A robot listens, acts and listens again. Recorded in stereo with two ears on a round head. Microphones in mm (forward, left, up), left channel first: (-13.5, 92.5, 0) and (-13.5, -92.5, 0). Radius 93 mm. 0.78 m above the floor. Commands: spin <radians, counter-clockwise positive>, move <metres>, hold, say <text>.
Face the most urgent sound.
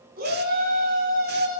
spin -0.79
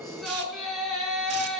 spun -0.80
say Facing the shout.